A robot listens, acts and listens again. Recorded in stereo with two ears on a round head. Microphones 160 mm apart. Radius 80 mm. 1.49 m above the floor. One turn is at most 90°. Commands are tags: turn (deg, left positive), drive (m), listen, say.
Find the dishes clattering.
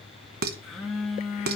<turn deg="-55"/>
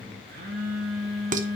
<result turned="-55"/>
<turn deg="-55"/>
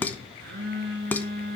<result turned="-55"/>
<turn deg="10"/>
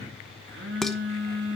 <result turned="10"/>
<listen/>
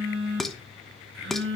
<say>Found it: dishes clattering, straight ahead, under 1 m away.</say>